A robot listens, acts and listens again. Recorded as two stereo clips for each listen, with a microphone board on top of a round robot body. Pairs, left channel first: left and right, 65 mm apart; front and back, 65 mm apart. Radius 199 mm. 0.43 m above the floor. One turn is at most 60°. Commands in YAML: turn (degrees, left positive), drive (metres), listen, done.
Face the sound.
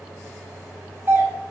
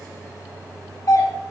turn: -35
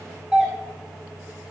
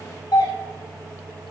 turn: -10
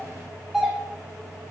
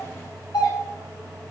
done: "Found it: a doorbell, straight ahead, 2 to 4 m away."